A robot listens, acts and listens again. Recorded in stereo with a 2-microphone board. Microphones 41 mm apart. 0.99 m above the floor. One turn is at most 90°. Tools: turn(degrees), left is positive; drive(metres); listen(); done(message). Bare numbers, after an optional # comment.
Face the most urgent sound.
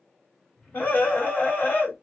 # The scream: about 55° left or 125° left.
turn(55)
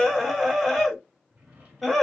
done("Found it: a scream, straight ahead, 1 to 2 m away.")